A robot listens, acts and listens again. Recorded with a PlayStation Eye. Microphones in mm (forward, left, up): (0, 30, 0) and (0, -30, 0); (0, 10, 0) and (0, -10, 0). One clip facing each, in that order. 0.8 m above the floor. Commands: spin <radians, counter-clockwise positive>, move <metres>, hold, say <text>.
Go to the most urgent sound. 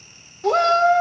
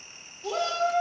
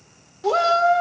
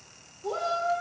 spin 1.05
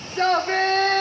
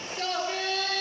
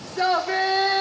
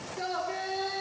spin 0.96
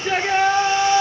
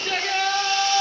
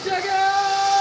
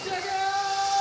spin 0.44
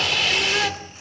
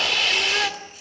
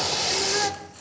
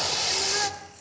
move 1.0
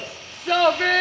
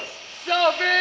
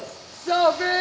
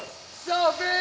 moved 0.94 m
move 1.0
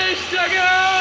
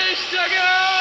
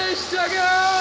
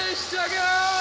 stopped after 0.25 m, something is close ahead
spin 0.17
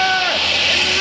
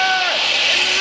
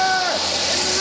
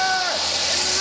say I am next to the shout.